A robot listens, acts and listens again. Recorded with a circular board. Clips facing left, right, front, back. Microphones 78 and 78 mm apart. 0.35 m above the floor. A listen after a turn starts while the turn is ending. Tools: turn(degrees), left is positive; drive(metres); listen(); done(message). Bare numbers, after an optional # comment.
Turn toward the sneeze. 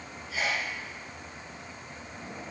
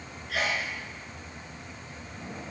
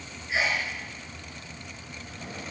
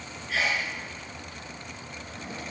# The sneeze: 70° right.
turn(-70)
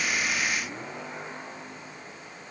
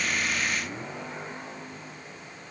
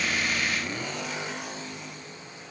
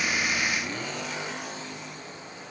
done("Facing where the sneeze came from. I can't hear it now.")